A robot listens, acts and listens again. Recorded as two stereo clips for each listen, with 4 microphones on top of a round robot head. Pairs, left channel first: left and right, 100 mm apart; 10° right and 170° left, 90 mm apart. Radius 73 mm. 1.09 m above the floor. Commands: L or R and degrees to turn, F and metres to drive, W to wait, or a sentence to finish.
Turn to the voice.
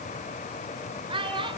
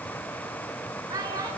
R130
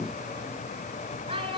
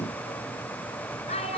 R40
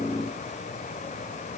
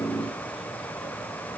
W
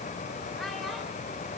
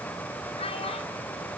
W
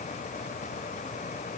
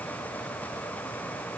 I heard a child speaking from this way, but can't make it out now.